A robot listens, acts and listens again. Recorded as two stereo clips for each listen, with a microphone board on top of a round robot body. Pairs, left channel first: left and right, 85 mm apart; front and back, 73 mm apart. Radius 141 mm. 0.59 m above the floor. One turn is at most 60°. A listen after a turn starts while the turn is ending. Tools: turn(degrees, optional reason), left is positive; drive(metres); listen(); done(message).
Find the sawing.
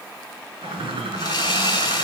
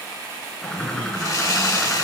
turn(degrees=45, reason="The sawing: 45° left.")
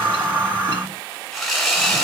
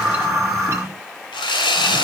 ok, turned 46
done("Facing the sawing.")